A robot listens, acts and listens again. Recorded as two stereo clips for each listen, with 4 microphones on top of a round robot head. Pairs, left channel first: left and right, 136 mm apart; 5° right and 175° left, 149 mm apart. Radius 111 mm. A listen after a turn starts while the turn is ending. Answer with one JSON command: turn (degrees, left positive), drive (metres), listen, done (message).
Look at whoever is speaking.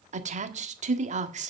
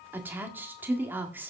{"turn": -110}
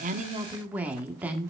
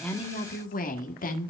{"turn": -10}
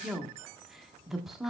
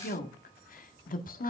{"done": "Facing the woman speaking."}